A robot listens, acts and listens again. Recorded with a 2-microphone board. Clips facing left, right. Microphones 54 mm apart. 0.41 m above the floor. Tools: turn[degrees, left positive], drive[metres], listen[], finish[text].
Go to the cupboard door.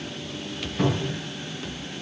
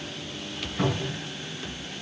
Action: turn[-30]
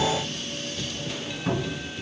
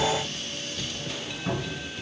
Thought: So it is at 25° left.
Action: turn[25]
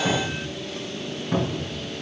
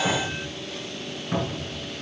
Action: drive[1.0]
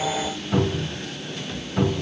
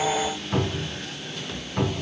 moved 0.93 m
Action: drive[1.0]
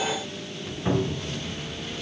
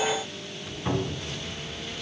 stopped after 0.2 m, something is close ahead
Thought: The cupboard door is now 15° left.
Action: turn[15]
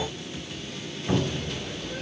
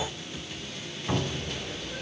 Action: finish[I am next to the cupboard door.]